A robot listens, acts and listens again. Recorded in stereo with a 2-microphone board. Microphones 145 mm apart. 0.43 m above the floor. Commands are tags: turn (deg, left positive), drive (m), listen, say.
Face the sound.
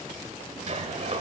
<turn deg="-55"/>
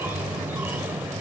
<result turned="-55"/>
<turn deg="-15"/>
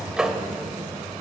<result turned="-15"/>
<say>Found it: a sliding door, straight ahead.</say>